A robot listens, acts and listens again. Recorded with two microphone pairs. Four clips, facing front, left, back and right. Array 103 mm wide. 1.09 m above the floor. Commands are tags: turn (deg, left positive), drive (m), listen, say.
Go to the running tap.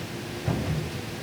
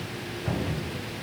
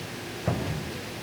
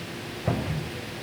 <listen/>
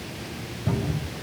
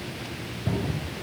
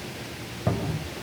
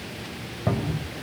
<listen/>
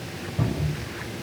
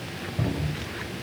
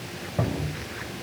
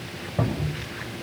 <say>I can't make out a running tap to turn to.</say>